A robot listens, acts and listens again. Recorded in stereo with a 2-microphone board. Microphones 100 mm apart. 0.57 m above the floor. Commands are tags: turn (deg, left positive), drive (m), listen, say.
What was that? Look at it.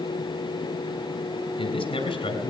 <turn deg="55"/>
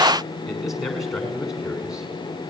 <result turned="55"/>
<say>Facing the man speaking.</say>